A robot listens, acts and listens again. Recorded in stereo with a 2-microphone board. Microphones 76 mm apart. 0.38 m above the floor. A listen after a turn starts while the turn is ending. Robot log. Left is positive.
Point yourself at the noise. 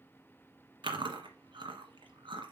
cmd yaw -90
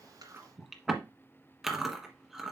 end: Facing the chewing, 1 to 2 m away.